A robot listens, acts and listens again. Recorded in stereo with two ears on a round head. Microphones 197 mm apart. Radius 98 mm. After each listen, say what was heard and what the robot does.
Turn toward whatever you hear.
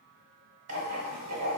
The writing: about 75° right or 105° right. Turn 75° right.
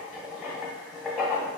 Facing the writing.